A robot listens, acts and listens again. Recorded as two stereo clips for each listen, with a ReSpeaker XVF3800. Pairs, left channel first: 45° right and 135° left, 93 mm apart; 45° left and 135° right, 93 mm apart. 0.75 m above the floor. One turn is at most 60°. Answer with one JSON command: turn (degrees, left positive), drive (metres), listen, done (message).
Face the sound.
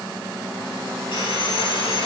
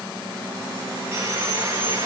{"turn": -60}
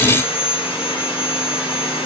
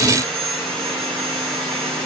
{"turn": -35}
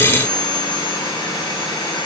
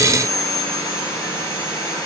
{"done": "Facing the sawing, over 4 m away."}